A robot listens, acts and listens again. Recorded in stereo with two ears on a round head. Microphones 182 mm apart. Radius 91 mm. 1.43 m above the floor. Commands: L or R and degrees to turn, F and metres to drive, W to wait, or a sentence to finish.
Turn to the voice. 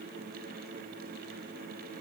W
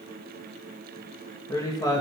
L20
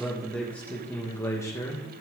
L15
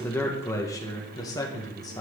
L20
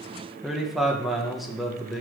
L30
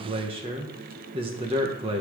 R25
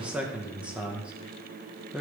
Found it: a man speaking, straight ahead, 1 to 2 m away.